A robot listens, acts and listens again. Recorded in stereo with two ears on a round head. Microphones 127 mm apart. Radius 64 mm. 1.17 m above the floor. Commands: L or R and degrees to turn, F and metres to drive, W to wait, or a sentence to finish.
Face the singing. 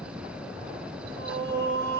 R75
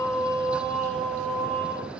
Found it: singing, straight ahead.